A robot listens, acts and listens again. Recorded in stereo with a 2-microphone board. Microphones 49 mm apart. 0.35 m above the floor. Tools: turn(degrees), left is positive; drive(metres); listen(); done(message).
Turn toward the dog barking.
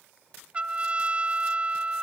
listen()
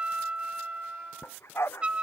turn(degrees=60)
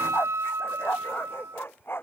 turn(degrees=55)
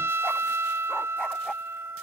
listen()
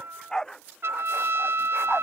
turn(degrees=15)
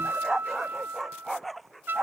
done("Found it: a dog barking, straight ahead.")